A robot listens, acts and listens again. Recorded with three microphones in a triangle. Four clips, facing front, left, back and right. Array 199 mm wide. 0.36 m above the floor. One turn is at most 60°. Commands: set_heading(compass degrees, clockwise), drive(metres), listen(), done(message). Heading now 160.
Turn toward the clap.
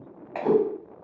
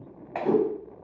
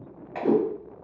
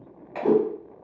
set_heading(105)
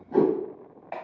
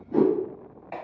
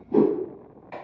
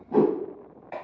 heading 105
done("Found it: a clap, straight ahead.")